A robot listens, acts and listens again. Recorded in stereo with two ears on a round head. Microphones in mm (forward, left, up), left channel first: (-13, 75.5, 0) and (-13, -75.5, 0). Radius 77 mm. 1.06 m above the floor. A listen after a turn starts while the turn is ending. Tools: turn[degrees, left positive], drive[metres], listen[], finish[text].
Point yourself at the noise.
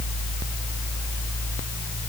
Action: listen[]
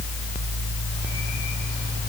Action: listen[]
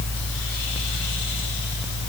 Action: finish[I can't make out anything to turn to.]